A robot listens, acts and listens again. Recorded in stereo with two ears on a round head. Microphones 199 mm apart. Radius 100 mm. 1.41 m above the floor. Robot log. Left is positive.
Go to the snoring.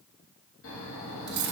note: The snoring: about 60° left or 120° left.
cmd yaw +60
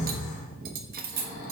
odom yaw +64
note: So it is at 35° left.
cmd yaw +35
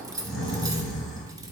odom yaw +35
cmd fwd 1.0
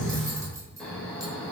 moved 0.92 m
cmd fwd 1.0
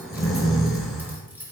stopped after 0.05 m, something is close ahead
end: I am next to the snoring.